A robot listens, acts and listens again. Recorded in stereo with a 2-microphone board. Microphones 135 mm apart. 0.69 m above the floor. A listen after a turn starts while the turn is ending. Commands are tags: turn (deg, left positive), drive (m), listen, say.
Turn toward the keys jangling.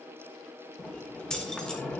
<turn deg="30"/>
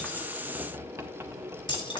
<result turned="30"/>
<turn deg="145"/>
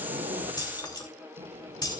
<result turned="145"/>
<turn deg="30"/>
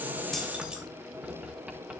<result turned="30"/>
<listen/>
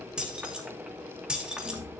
<turn deg="-10"/>
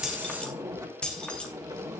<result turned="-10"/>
<say>Found it: keys jangling, straight ahead.</say>